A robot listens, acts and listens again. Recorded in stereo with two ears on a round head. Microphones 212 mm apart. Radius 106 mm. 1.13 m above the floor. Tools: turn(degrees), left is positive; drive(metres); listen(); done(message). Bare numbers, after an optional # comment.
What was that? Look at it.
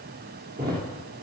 # The thud: about 40° right or 140° right.
turn(-40)
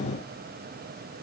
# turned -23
listen()
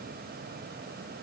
done("I heard a thud, but can't make it out now. It was about 15° right or 115° right.")